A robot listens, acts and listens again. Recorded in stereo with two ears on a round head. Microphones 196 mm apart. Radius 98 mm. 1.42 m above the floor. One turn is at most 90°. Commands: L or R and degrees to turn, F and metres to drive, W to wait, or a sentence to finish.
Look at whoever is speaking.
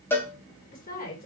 L45
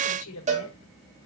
L90
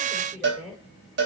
Facing the woman speaking, over 4 m away.